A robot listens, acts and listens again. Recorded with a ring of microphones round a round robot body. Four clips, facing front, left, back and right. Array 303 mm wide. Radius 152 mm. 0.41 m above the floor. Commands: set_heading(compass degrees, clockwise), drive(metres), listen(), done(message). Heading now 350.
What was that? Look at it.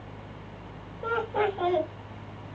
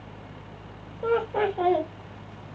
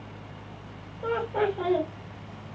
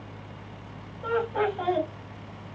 set_heading(250)
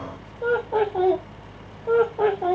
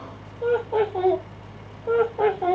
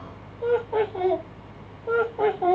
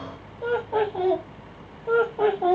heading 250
set_heading(170)
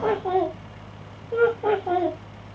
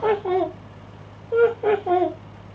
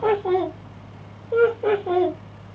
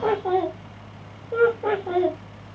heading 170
set_heading(55)
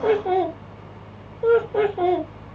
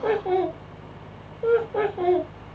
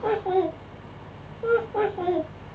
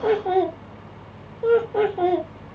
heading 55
set_heading(85)
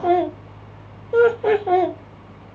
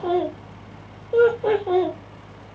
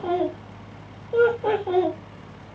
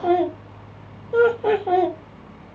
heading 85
done("Found it: laughter, straight ahead, 1 to 2 m away.")